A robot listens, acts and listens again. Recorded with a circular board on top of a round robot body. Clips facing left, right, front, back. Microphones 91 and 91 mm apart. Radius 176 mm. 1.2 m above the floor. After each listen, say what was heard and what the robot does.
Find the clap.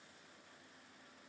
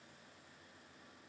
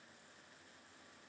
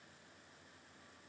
Keep listening.
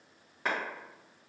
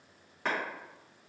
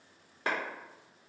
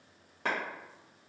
The clap: 175° left. Turn 175° left.
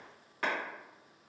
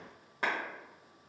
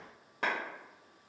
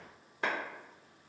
The clap is now 20° right. Turn 20° right.
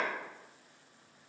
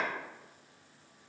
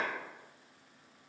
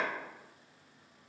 Keep listening.
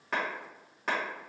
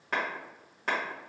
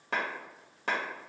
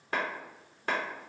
Facing the clap.